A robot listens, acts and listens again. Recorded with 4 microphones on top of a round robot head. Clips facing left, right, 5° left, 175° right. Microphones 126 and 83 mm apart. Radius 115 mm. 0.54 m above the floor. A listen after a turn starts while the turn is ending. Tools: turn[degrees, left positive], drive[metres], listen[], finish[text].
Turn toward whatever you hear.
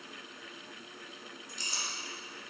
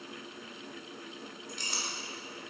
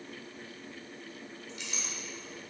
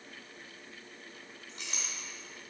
Thought: The clink: 120° right.
Action: turn[-120]
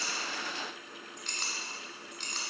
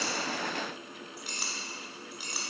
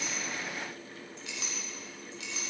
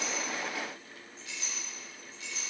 Thought: The clink is now 10° right.
Action: turn[-10]
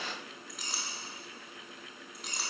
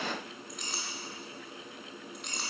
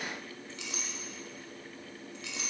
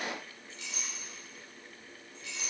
Action: finish[Found it: a clink, straight ahead, 1 to 2 m away.]